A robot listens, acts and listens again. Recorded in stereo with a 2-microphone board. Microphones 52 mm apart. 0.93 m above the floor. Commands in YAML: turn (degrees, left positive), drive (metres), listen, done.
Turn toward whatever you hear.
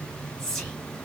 turn: 30
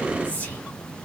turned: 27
turn: 140
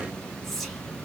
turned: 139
done: "Facing the whispering, 2 to 4 m away."